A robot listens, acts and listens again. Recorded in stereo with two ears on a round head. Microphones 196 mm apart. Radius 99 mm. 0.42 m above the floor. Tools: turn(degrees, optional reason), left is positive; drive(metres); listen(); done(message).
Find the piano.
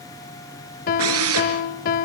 turn(degrees=40, reason="The piano: about 40° left or 140° left.")
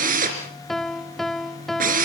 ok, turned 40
done("Facing the piano, under 1 m away.")